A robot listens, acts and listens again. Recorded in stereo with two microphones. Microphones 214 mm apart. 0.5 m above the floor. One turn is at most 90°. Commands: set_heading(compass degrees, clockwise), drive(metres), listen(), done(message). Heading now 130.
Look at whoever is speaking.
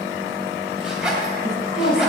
set_heading(70)
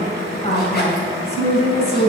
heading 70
set_heading(25)
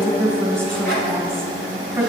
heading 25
done("Found it: a woman speaking, straight ahead, 2 to 4 m away.")